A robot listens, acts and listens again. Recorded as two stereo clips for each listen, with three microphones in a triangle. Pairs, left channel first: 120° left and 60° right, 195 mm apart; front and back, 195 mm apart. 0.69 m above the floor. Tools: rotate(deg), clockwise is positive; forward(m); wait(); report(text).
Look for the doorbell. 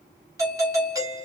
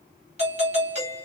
rotate(130)
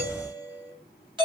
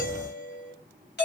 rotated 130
report("Found it: a doorbell, straight ahead.")